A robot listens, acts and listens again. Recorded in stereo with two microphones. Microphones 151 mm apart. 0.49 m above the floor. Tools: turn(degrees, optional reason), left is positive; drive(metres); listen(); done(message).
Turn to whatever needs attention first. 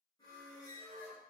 listen()
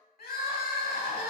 turn(degrees=75, reason="The crying: about 75° left or 105° left.")
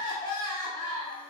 turn(degrees=30, reason="So it is at 30° left.")
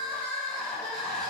done("Found it: crying, straight ahead.")